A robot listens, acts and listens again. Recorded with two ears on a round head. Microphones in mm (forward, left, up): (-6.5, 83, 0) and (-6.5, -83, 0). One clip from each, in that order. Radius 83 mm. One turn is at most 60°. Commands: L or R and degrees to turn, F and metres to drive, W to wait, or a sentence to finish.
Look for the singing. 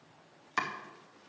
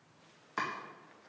W
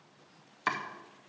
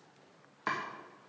W
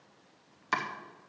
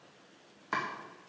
I can't make out singing to turn to.